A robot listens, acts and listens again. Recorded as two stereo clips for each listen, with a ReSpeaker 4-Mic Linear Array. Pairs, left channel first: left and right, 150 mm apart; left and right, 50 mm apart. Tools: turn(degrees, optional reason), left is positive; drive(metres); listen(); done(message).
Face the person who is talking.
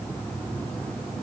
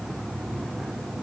listen()
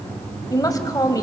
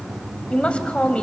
turn(degrees=25, reason="The woman speaking: about 25° left or 155° left.")
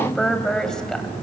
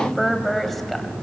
done("Found it: a woman speaking, straight ahead.")